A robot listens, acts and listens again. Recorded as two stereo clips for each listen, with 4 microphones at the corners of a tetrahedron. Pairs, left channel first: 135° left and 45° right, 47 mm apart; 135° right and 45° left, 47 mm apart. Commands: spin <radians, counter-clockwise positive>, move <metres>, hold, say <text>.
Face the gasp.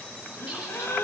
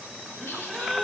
spin 2.62
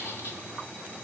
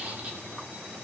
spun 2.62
say I heard a gasp from this way, but can't make it out now.